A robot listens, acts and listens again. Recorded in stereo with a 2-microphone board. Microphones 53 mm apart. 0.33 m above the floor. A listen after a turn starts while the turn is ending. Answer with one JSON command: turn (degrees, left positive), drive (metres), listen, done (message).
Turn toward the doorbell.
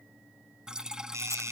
{"turn": -65}
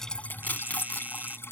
{"turn": -35}
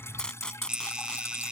{"turn": -20}
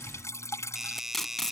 {"turn": -10}
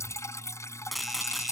{"listen": true}
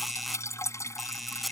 {"done": "Facing the doorbell."}